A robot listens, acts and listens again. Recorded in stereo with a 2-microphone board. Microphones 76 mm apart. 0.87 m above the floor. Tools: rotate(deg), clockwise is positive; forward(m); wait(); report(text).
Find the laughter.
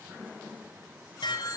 wait()
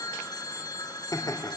rotate(-50)
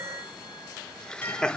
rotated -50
rotate(-10)
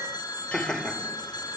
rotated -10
report("Found it: laughter, straight ahead.")